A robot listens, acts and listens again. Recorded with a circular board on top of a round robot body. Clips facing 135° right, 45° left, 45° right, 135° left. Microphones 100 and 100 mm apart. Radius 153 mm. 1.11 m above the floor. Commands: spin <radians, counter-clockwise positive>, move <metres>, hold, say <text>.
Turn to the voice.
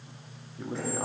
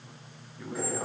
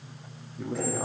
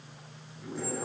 spin -1.22
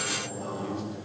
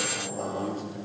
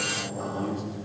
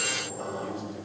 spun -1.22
say Found it: a man speaking, straight ahead.